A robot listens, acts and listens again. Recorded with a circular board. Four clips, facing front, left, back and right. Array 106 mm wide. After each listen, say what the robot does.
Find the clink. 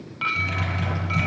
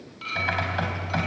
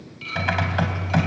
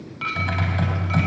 Turn 30° right.
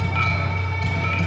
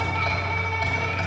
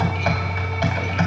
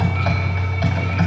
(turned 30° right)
Keep listening.
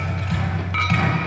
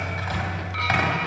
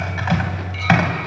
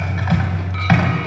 Keep listening.
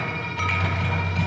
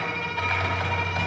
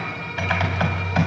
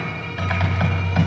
Facing where the clink came from. I can't hear it now.